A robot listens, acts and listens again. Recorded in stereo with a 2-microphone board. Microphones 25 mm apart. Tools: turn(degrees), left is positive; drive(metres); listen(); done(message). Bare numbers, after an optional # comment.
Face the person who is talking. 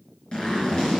listen()
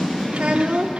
# The child speaking: about 60° right or 120° right.
turn(-60)
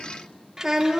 # So it is at 20° right.
turn(-20)
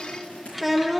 done("Facing the child speaking, under 1 m away.")